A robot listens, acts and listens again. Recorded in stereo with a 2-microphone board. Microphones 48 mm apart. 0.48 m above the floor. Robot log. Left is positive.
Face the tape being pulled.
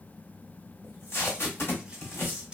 note: The tape being pulled: about 60° left or 120° left.
cmd yaw +60
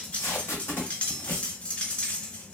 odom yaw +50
note: So it is at 65° left.
cmd yaw +65
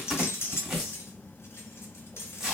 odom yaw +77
note: The tape being pulled is now 10° right.
cmd yaw -10
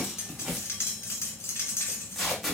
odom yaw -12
end: Found it: tape being pulled, straight ahead, 1 to 2 m away.